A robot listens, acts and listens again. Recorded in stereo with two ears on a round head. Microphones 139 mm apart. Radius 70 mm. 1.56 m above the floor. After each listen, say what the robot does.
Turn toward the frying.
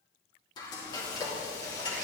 Turn 25° left.
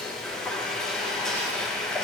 Facing the frying.